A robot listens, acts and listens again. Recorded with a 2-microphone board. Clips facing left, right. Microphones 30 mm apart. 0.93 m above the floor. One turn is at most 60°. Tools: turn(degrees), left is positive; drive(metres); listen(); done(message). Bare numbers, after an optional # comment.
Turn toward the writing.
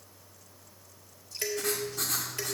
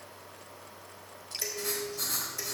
# The writing: about 75° left or 105° left.
turn(60)
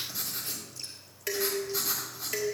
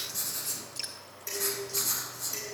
# So it is at 15° left.
turn(15)
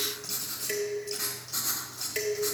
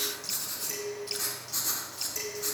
done("Found it: writing, straight ahead, 2 to 4 m away.")